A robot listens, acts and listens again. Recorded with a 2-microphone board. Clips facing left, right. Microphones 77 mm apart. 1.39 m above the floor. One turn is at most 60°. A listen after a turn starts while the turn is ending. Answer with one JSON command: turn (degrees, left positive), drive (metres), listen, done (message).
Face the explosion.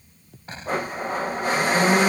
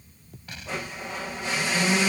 {"turn": 35}
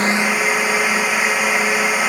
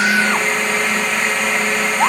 {"listen": true}
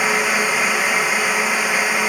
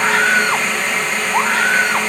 {"done": "I heard an explosion, but can't make it out now. It was about straight ahead or 110° left."}